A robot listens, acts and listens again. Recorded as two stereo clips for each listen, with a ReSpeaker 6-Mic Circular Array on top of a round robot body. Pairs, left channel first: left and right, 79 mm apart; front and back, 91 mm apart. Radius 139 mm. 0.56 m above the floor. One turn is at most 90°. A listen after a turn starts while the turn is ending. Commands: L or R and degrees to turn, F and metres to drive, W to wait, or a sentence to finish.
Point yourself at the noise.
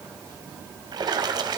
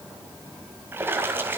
R90
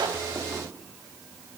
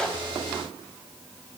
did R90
R25
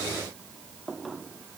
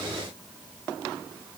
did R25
I heard a splash from this way, but can't make it out now.